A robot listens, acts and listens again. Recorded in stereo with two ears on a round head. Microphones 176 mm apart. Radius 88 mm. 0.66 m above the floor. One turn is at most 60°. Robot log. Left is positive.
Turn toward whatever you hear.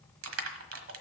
cmd yaw -60
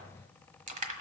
note: So it is at 40° right.
cmd yaw -40
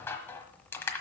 note: The crushing is now 10° left.
cmd yaw +10
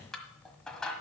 end: Facing the crushing, 1 to 2 m away.